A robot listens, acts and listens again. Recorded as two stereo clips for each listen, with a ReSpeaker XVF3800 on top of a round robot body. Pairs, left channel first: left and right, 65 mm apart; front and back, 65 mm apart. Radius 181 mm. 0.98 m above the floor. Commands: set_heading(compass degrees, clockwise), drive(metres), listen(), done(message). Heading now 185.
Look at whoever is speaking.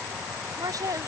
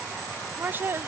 set_heading(310)
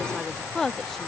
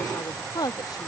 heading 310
done("Found it: a woman speaking, straight ahead.")